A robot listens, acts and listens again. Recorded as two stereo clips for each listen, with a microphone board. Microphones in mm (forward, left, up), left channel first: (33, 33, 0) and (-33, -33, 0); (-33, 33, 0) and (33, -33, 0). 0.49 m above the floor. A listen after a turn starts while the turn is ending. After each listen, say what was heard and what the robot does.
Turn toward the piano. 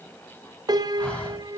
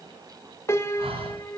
The piano: 170° right. Turn 170° right.
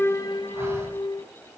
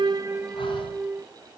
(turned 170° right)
The piano is now 25° left. Turn 25° left.
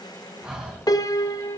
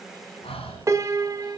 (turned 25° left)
Found it: a piano, straight ahead.